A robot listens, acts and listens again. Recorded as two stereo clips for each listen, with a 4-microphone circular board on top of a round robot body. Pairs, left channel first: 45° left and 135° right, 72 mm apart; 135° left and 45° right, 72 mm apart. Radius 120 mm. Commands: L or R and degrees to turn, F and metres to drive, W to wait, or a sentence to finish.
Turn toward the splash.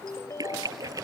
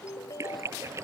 R95
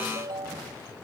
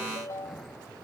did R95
I heard a splash from this way, but can't make it out now.